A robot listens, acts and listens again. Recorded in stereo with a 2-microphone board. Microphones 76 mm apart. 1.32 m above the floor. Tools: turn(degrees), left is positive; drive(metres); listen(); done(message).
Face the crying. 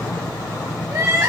turn(degrees=-45)
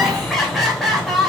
done("Found it: crying, straight ahead, 2 to 4 m away.")